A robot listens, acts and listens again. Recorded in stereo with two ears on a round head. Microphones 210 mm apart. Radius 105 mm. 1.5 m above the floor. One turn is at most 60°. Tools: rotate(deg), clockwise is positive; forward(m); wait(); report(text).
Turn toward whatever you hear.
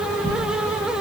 rotate(-35)
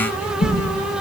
rotate(-60)
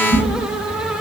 rotate(-50)
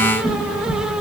report("Found it: a whoosh, straight ahead, 2 to 4 m away.")